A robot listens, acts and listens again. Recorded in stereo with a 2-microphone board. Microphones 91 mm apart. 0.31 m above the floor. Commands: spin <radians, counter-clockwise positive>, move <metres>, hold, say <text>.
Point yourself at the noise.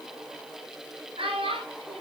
spin -1.57
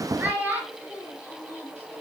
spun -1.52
spin -0.35
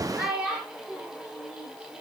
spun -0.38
spin -0.17
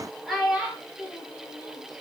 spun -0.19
say Found it: a child speaking, straight ahead.